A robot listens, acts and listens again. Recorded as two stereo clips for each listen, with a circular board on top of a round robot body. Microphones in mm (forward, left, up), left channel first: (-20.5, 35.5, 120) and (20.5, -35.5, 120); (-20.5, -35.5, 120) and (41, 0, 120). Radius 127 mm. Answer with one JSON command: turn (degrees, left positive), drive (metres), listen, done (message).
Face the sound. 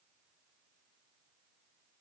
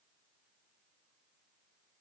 {"listen": true}
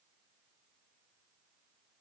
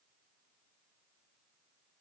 {"listen": true}
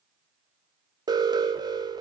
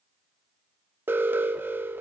{"turn": -30}
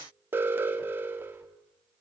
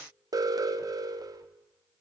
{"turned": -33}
{"done": "Found it: an alarm, straight ahead."}